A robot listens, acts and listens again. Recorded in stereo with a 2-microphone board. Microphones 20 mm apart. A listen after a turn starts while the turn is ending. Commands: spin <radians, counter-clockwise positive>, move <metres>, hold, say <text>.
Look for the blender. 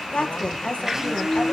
spin -0.52
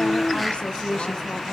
hold
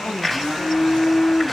say Facing the blender, 2 to 4 m away.